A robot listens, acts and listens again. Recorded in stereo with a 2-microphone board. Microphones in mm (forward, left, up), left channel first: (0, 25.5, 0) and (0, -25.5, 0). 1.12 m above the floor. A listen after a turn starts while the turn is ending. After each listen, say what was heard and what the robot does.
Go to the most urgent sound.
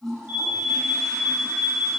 The alarm: about 30° right or 150° right. Turn 30° right.
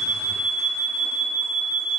Drive 1.0 m forward.
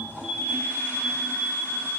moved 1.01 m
Drive 1.0 m forward.
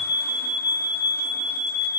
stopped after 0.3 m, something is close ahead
Arrived at the alarm, straight ahead.